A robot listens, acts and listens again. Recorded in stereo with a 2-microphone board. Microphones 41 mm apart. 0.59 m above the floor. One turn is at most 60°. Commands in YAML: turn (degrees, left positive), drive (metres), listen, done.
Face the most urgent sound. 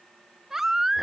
turn: -30
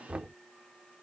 listen: true
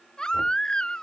turn: 20
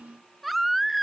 done: "Facing the baby crying."